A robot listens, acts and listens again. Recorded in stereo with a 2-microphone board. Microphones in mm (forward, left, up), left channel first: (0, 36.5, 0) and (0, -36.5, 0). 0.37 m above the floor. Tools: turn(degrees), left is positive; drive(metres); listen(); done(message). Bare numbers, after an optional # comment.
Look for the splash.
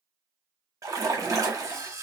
# The splash: about 50° right or 130° right.
turn(-50)
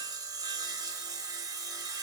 listen()
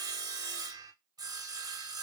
done("I heard a splash, but can't make it out now. It was about straight ahead or 80° right.")